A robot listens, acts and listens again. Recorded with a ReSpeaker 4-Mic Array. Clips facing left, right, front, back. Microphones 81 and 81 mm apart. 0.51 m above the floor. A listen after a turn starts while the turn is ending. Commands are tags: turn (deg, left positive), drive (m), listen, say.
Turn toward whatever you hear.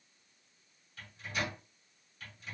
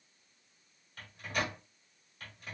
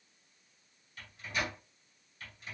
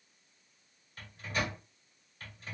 <turn deg="-130"/>
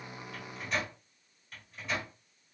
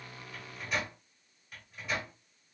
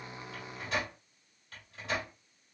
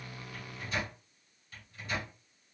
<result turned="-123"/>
<say>Facing the microwave, 1 to 2 m away.</say>